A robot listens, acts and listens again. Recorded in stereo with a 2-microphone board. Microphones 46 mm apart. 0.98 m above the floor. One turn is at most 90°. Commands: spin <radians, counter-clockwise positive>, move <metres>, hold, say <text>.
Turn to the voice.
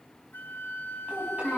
spin -0.61
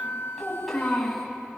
say Found it: a child speaking, straight ahead, over 4 m away.